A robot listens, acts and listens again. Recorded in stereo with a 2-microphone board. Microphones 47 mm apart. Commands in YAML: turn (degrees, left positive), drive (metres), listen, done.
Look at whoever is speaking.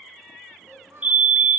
turn: -70
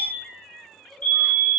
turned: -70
listen: true
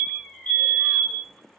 listen: true
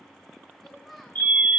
done: "Found it: a child speaking, straight ahead, 2 to 4 m away."